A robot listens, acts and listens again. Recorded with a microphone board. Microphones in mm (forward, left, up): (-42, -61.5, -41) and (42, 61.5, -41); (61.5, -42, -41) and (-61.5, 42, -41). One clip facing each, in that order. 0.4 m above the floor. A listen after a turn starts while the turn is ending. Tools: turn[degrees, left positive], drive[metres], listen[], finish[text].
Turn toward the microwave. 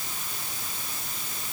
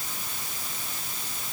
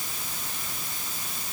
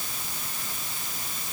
Action: listen[]
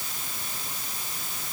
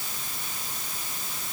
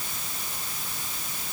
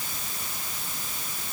Action: listen[]
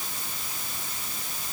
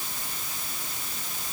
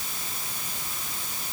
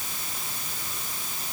Action: finish[I can't make out a microwave.]